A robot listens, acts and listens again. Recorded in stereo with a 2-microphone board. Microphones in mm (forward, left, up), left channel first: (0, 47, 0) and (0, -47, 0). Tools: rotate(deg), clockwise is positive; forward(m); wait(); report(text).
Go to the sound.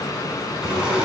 rotate(30)
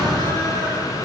rotate(140)
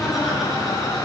forward(1.0)
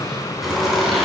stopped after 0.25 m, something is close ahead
report("Something is in my way. I am facing the laughter but have not reached it.")